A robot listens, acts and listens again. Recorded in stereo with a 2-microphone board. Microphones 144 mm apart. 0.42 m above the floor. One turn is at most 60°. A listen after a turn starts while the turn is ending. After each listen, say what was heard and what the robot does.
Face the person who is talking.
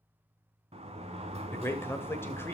The man speaking: about 15° left or 165° left. Turn 15° left.
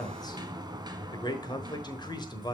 So it is at 150° left. Turn 60° left.
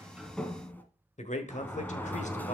The man speaking is now 100° left. Turn 60° left.
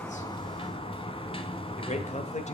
The man speaking is now 75° left. Turn 60° left.
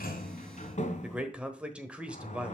The man speaking is now 10° right. Turn 10° right.
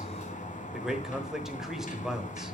Found it: a man speaking, straight ahead, 1 to 2 m away.